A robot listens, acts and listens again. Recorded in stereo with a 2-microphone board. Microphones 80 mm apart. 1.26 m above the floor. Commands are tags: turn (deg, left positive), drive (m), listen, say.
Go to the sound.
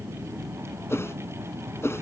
<turn deg="30"/>
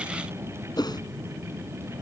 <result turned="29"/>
<turn deg="115"/>
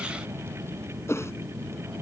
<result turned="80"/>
<turn deg="35"/>
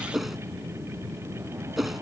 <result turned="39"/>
<drive m="1.0"/>
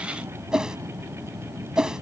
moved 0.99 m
<turn deg="-10"/>
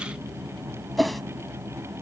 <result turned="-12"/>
<drive m="1.0"/>
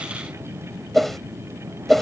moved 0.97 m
<drive m="1.0"/>
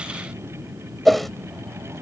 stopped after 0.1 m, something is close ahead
<say>I am next to the whoosh.</say>